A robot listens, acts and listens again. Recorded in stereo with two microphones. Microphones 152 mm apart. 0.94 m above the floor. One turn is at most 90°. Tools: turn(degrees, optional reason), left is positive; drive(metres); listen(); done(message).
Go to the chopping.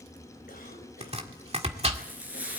turn(degrees=-45, reason="The chopping: about 45° right or 135° right.")
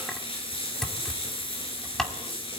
drive(metres=1.0)
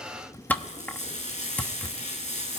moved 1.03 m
turn(degrees=10, reason="The chopping is now 10° left.")
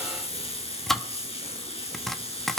drive(metres=1.0)
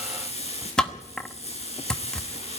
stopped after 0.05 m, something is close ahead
done("I am next to the chopping.")